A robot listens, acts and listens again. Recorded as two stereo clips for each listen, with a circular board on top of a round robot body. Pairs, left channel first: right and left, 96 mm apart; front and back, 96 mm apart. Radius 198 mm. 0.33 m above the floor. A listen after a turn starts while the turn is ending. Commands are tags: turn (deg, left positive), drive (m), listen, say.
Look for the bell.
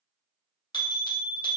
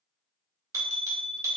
<turn deg="-125"/>
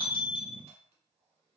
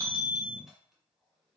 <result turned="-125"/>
<turn deg="-35"/>
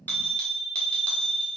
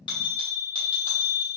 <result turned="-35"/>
<turn deg="-10"/>
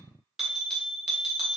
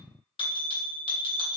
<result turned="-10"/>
<say>Found it: a bell, straight ahead.</say>